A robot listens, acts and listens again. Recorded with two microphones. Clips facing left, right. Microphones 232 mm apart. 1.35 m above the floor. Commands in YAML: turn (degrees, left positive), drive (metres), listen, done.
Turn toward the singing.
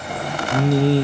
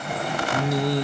turn: 30
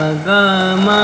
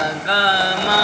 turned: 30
turn: 115
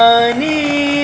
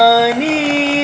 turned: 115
done: "Facing the singing, under 1 m away."